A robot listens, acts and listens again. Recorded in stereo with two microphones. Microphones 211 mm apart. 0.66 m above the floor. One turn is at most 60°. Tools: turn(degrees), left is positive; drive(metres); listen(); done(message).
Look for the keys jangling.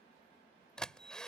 listen()
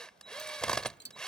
turn(degrees=55)
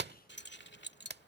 turn(degrees=60)
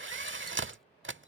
listen()
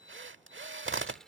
done("Found it: keys jangling, straight ahead.")